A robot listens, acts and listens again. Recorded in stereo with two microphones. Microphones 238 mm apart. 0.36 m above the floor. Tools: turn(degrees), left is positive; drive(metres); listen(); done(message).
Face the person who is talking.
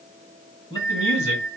turn(degrees=30)
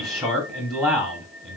turn(degrees=-15)
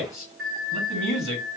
done("Found it: a man speaking, straight ahead, 1 to 2 m away.")